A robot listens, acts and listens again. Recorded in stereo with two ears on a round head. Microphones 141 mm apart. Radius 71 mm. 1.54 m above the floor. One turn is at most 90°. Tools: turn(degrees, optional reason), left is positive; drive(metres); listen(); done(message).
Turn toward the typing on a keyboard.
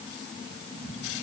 listen()
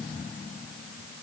listen()
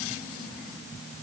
done("I can't make out typing on a keyboard to turn to.")